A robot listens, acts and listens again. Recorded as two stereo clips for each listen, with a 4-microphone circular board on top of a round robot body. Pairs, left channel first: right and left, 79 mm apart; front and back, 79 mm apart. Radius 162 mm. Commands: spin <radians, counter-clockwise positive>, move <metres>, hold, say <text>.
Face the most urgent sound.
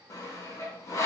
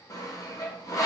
hold
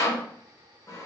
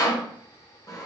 hold
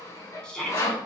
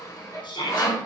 spin -0.17
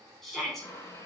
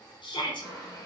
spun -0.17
say Facing the shout, under 1 m away.